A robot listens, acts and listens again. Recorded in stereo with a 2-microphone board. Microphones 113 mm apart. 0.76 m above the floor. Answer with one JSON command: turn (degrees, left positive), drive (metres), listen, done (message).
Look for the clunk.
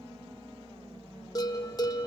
{"listen": true}
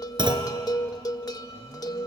{"turn": -45}
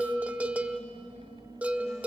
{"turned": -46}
{"listen": true}
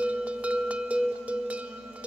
{"done": "I heard a clunk, but can't make it out now. It was about straight ahead or 90° right."}